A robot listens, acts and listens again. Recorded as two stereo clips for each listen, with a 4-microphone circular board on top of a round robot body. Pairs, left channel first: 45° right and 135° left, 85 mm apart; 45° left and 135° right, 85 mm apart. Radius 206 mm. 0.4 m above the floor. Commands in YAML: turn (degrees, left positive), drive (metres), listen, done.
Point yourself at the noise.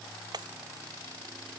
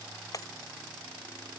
turn: 95
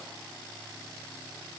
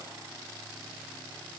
done: "I heard breaking glass from this way, but can't make it out now."